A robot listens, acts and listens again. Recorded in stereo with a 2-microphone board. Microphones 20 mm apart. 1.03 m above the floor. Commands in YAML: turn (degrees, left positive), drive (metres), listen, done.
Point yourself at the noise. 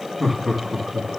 turn: -20
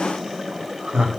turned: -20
turn: -130
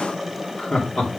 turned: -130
turn: 50
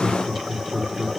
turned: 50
done: "Found it: laughter, straight ahead, 2 to 4 m away."